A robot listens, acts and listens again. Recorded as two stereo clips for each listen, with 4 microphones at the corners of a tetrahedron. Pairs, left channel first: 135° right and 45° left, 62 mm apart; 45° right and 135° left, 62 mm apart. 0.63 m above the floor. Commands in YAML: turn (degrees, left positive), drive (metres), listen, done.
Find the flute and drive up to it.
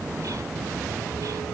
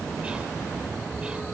listen: true
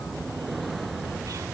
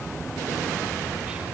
listen: true
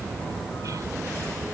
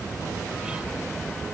done: "I can't make out a flute to turn to."